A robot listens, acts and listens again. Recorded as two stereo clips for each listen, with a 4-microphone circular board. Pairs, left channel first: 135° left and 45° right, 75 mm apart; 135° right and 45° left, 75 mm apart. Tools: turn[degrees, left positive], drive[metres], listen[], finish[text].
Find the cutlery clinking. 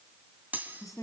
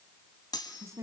Thought: The cutlery clinking: 110° right.
Action: turn[-110]
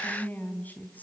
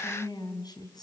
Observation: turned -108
Action: listen[]
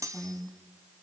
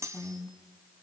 Action: finish[Found it: cutlery clinking, straight ahead, 2 to 4 m away.]